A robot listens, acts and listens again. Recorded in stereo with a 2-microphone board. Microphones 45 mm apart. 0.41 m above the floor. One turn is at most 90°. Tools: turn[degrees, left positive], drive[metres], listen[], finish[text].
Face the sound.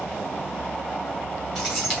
Action: turn[30]
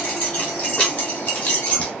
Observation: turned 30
Thought: So it is at 155° left.
Action: turn[90]
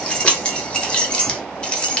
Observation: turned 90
Thought: The keys jangling is now 20° left.
Action: turn[20]
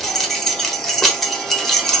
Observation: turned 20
Action: finish[Found it: keys jangling, straight ahead, 1 to 2 m away.]